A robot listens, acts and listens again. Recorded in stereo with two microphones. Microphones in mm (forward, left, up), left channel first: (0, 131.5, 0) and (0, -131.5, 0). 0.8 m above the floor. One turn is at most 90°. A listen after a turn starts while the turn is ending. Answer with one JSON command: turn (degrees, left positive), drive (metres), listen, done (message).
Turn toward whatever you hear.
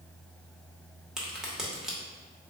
{"turn": -30}
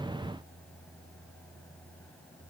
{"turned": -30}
{"listen": true}
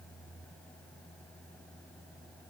{"done": "I heard a crack, but can't make it out now. It was about 25° left or 145° right."}